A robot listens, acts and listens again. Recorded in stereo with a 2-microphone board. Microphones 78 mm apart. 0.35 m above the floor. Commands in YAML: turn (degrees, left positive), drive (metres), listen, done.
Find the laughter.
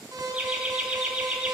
turn: -30
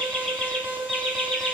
done: "Found it: laughter, straight ahead, 1 to 2 m away."